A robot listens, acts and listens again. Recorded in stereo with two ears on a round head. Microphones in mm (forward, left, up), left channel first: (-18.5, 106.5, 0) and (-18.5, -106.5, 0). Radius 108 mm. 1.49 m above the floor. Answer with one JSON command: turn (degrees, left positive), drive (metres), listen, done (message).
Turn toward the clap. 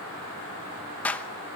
{"turn": 30}
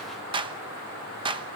{"turn": -20}
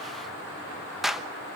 {"done": "Found it: a clap, straight ahead."}